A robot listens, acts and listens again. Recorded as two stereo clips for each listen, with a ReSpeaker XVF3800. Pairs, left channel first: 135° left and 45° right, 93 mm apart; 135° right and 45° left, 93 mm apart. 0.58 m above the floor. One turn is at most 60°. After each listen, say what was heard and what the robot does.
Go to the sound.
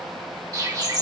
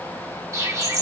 Drive 1.0 m forward.
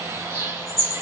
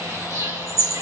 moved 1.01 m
Drive 1.0 m forward.
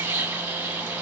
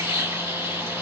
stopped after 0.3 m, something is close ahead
I am next to the bird.